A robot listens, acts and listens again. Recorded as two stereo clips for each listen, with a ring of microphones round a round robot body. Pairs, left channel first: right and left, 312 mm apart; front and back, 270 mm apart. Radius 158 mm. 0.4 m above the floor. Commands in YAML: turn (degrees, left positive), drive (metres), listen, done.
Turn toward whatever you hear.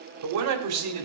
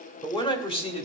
turn: 65
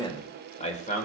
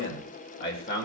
turn: -40
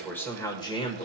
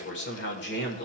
turn: -30
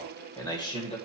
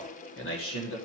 turn: -20
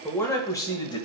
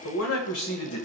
turn: -15
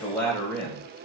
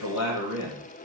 done: "Facing the man speaking, 2 to 4 m away."